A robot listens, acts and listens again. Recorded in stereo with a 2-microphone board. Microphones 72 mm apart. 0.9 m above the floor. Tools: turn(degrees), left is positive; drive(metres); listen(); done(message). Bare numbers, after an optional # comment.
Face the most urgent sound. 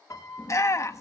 # The shout: about 45° left or 135° left.
turn(45)
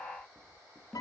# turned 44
listen()
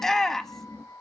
done("Facing the shout, 1 to 2 m away.")